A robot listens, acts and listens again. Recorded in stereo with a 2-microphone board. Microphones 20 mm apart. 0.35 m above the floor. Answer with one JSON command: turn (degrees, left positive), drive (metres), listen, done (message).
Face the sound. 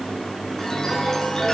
{"turn": 25}
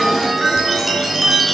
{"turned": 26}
{"done": "Facing the chime, over 4 m away."}